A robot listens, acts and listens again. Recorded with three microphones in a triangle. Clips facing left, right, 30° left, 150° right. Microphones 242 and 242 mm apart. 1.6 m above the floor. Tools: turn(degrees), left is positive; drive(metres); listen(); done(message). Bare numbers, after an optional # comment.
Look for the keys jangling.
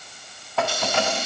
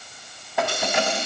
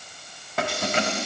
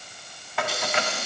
# The keys jangling: 20° right.
turn(-20)
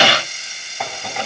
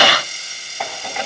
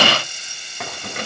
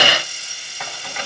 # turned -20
done("Found it: keys jangling, straight ahead.")